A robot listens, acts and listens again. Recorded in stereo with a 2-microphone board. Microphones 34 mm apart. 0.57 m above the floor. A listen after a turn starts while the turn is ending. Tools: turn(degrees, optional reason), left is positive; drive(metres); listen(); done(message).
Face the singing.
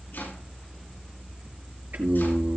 turn(degrees=-70, reason="The singing: about 70° right or 110° right.")
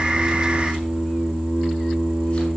turn(degrees=-40, reason="So it is at 40° right.")
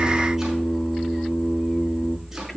done("Found it: singing, straight ahead.")